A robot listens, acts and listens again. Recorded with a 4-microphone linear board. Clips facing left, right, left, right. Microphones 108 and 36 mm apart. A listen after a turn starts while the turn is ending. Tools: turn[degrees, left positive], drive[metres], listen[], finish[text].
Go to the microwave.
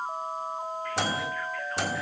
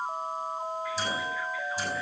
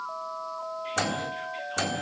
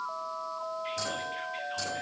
Action: turn[90]
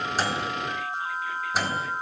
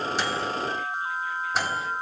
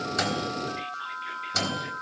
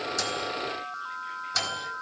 Action: drive[1.0]
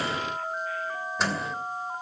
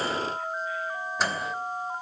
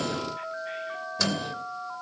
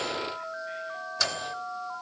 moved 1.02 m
Action: drive[1.0]
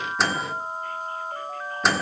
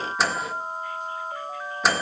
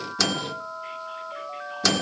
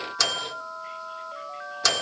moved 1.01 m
Action: drive[1.0]
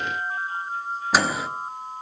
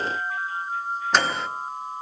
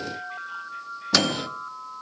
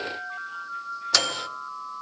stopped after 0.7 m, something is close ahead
Action: finish[Arrived at the microwave, straight ahead.]